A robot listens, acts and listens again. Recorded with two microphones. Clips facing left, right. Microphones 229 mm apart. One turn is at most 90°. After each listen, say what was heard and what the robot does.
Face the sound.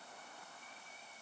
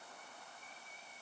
Keep listening.
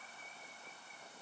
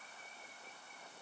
Keep listening.
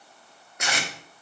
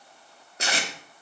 The tape being pulled: about 30° right or 150° right. Turn 30° right.
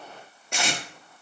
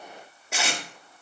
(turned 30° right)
Facing the tape being pulled.